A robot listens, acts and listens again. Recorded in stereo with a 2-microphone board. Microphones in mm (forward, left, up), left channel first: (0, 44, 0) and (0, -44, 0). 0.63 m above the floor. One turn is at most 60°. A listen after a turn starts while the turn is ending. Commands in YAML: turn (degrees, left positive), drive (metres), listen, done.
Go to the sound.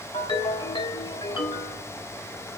turn: 60
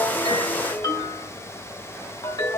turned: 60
turn: 50
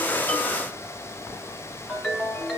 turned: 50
drive: 1.0
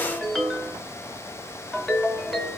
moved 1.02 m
drive: 1.0
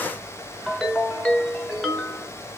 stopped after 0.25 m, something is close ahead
done: "Arrived at the ringtone, straight ahead."